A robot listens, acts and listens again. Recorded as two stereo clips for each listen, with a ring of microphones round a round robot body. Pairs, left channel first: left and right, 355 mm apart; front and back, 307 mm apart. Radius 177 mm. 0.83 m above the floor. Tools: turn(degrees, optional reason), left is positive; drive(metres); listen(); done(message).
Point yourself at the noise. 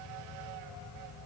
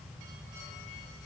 listen()
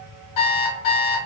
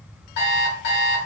turn(degrees=55, reason="The alarm clock: 55° left.")
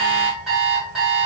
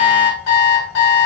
done("Facing the alarm clock, 1 to 2 m away.")